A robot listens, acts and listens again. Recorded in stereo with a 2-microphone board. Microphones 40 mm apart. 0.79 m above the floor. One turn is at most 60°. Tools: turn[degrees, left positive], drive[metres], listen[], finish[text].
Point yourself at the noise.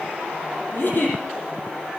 Thought: The giggle: about 55° left or 125° left.
Action: turn[55]
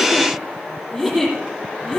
Action: finish[Facing the giggle, over 4 m away.]